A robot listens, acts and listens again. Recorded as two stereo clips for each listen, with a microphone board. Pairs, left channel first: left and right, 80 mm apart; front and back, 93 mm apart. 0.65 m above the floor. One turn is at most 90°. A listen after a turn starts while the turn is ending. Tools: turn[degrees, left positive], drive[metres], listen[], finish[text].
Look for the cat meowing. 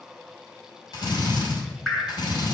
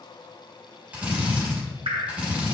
Action: listen[]
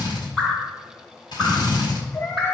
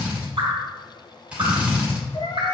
Thought: The cat meowing: 40° left.
Action: turn[40]
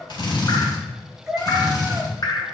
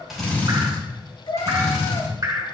Thought: The cat meowing is now 10° right.
Action: turn[-10]
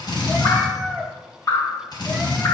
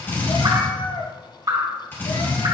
Action: finish[Facing the cat meowing.]